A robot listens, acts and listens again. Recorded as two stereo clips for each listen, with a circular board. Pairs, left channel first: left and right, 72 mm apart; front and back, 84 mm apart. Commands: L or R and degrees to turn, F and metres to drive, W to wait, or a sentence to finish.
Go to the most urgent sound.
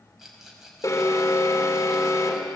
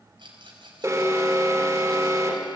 L135
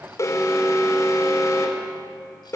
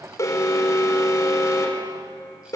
L50
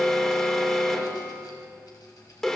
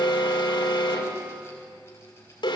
F1.0
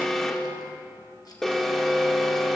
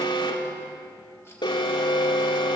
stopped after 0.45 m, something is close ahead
Something is in my way. I am facing the alarm but have not reached it.